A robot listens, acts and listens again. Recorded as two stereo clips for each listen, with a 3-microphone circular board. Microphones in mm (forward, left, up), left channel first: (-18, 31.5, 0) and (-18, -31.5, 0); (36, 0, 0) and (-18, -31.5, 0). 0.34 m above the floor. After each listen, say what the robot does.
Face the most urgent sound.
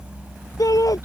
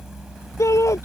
Turn 70° left.
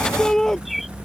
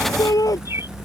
Facing the shout.